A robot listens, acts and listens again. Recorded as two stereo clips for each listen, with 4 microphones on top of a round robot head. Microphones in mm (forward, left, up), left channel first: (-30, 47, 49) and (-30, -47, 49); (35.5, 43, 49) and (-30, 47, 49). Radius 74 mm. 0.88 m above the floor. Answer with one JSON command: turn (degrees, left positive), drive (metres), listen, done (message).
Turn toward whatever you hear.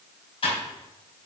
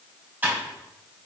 {"turn": 115}
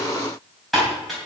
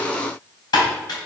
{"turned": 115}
{"done": "Found it: typing on a keyboard, straight ahead."}